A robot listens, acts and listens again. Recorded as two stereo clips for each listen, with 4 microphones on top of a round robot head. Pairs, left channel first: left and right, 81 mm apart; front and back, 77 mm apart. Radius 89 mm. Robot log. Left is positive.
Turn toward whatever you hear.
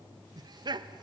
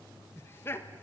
note: The laughter: 60° right.
cmd yaw -60
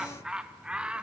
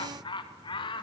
note: The laughter is now 10° right.
cmd yaw -10
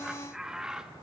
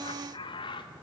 note: The laughter is now 10° right.
cmd yaw -10
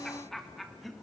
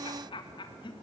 end: Facing the laughter.